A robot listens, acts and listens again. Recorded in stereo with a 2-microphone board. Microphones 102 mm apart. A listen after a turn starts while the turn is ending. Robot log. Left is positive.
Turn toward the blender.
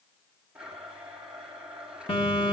cmd yaw -30
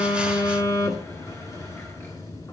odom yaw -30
cmd idle
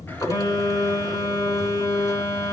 cmd idle
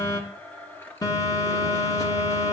note: So it is at 20° left.
cmd yaw +20
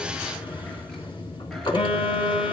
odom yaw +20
cmd idle
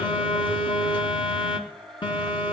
end: Found it: a blender, straight ahead.